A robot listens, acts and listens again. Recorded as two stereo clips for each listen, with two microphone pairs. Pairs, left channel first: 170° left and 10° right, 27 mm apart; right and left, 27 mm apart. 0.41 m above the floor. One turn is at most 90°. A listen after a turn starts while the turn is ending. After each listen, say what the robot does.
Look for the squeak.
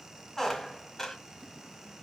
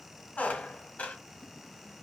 Turn 90° right.
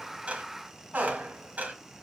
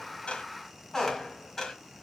Turn 20° right.
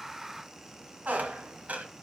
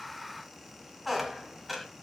Found it: a squeak, straight ahead, 1 to 2 m away.